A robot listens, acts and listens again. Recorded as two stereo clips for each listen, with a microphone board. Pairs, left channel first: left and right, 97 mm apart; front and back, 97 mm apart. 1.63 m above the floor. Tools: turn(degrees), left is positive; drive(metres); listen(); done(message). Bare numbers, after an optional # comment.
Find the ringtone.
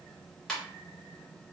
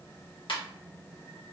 # The ringtone: 10° left.
turn(10)
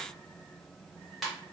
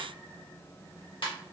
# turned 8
done("Facing the ringtone, 1 to 2 m away.")